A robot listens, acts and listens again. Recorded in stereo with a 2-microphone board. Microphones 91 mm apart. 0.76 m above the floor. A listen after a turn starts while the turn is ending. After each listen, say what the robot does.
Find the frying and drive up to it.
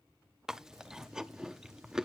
Keep listening.
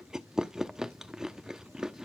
Keep listening.
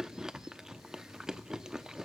I can't make out frying, only chewing.